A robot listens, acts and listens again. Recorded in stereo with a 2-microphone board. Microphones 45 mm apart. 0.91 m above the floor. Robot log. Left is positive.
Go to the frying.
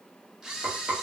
note: The frying: about 50° right or 130° right.
cmd yaw -50
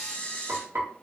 note: So it is at 80° right.
cmd yaw -80
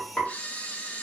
note: The frying is now 25° left.
cmd yaw +25
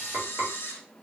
cmd fwd 1.0
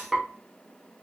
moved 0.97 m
note: The frying is now 10° right.
cmd yaw -10
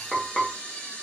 cmd fwd 1.0
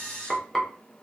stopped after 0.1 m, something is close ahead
end: Arrived at the frying, straight ahead.